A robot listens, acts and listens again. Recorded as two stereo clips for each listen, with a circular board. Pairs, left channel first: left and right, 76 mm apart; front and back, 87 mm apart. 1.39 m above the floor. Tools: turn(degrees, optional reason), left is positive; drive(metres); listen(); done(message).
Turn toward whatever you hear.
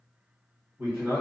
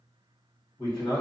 turn(degrees=-20, reason="The man speaking: 20° right.")
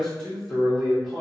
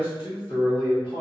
done("Facing the man speaking.")